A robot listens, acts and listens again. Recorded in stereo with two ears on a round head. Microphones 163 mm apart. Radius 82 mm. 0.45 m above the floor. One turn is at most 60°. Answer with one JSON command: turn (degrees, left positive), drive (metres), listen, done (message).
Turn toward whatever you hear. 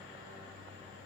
{"listen": true}
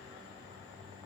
{"listen": true}
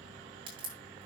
{"turn": -30}
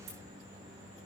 {"listen": true}
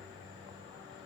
{"done": "I heard a crack, but can't make it out now. It was about straight ahead or 120° right."}